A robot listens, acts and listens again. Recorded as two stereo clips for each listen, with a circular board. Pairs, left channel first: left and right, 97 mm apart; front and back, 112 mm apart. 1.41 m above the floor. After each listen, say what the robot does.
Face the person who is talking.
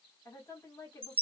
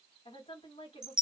Turn 25° left.
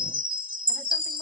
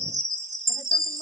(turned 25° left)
Keep listening.
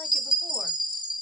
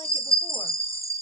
Keep listening.
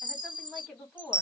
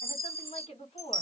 Facing the woman speaking.